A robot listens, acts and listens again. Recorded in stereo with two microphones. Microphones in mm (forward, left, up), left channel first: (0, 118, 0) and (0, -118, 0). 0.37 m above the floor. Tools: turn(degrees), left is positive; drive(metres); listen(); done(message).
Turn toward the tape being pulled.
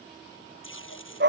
turn(degrees=60)
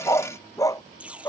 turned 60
done("Facing the tape being pulled.")